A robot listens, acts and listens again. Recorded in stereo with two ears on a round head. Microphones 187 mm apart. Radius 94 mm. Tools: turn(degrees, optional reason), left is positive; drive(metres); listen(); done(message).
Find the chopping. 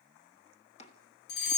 turn(degrees=30, reason="The chopping: about 30° left or 150° left.")
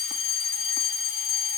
listen()
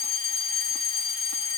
listen()
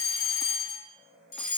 done("I heard chopping, but can't make it out now. It was about straight ahead or 120° left.")